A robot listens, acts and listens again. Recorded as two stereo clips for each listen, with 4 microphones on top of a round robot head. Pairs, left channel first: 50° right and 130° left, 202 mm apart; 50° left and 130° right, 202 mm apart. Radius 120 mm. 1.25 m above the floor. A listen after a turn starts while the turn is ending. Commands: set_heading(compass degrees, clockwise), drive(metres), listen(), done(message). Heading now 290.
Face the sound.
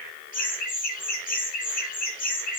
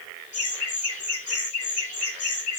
done("Facing the laughter, over 4 m away.")